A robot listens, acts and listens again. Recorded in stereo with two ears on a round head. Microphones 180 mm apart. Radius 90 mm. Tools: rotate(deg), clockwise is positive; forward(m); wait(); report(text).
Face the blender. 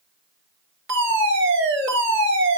wait()
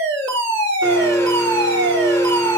rotate(-15)
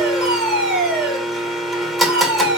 report("Found it: a blender, straight ahead, 2 to 4 m away.")